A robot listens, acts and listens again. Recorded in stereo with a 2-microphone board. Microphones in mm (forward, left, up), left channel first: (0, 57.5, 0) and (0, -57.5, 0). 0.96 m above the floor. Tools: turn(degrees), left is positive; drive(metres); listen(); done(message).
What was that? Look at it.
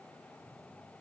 listen()
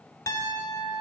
turn(degrees=30)
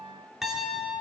done("Facing the piano.")